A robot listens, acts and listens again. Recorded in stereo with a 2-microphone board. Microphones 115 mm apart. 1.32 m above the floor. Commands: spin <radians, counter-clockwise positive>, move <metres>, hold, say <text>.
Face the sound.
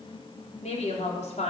spin 1.57
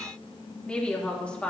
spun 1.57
spin 0.17
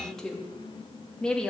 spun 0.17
spin 0.17
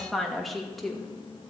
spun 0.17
say Found it: a woman speaking, straight ahead.